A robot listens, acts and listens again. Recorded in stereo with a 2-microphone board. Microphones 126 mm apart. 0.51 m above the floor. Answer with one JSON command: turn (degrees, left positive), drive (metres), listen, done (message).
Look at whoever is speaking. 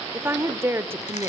{"turn": -20}
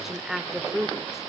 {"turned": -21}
{"done": "Facing the woman speaking, 1 to 2 m away."}